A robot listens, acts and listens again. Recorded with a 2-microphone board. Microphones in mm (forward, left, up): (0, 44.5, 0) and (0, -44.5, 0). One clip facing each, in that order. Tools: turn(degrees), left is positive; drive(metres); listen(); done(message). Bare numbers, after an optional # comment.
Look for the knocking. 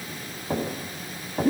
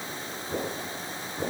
# The knocking: about 55° left or 125° left.
turn(55)
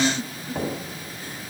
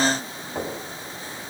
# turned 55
done("Facing the knocking, over 4 m away.")